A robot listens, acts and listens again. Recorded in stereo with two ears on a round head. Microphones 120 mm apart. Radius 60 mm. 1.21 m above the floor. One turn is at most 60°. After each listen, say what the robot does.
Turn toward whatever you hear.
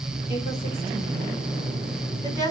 Turn 30° left.
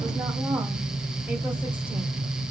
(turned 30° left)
Found it: a woman speaking, straight ahead, 2 to 4 m away.